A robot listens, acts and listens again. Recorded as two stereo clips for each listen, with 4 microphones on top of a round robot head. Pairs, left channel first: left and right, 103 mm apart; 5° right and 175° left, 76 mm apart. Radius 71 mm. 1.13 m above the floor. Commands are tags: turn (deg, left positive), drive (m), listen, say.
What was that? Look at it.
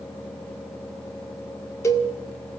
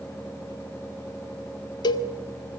<turn deg="20"/>
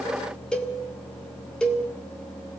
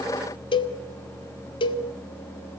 <say>Found it: a cowbell, straight ahead, 1 to 2 m away.</say>